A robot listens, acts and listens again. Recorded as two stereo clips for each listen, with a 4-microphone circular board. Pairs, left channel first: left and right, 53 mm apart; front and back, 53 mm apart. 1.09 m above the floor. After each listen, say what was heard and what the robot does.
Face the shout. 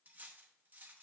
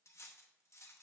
Keep listening.
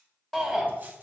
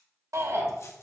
The shout: 175° left. Turn 175° left.
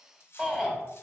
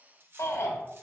The shout is now 20° right. Turn 20° right.
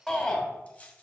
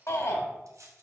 Found it: a shout, straight ahead.